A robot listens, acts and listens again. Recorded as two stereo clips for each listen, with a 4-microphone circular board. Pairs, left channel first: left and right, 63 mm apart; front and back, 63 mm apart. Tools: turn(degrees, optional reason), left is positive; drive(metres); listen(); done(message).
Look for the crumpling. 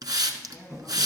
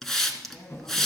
turn(degrees=-40, reason="The crumpling: 40° right.")
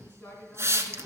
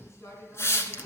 done("Facing the crumpling, 2 to 4 m away.")